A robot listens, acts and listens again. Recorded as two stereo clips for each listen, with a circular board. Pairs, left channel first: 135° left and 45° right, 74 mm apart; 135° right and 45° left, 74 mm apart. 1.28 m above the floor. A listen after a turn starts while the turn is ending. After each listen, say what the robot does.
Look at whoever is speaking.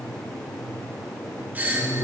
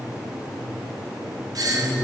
Turn 145° left.
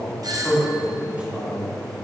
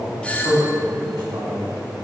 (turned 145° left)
Turn 25° left.
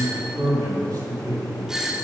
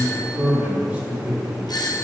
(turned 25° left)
Turn 30° right.
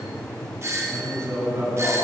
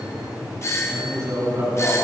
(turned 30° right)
Found it: a man speaking, straight ahead.